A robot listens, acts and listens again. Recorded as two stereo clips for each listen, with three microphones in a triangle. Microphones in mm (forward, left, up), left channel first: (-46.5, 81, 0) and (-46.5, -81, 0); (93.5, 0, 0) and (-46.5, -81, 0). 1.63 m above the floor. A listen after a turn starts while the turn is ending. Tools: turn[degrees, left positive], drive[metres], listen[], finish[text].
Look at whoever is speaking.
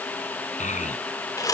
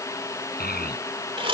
Thought: The child speaking: 50° left.
Action: turn[50]
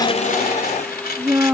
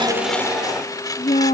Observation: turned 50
Thought: The child speaking is now 15° right.
Action: turn[-15]
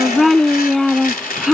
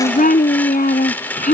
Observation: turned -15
Action: finish[Found it: a child speaking, straight ahead.]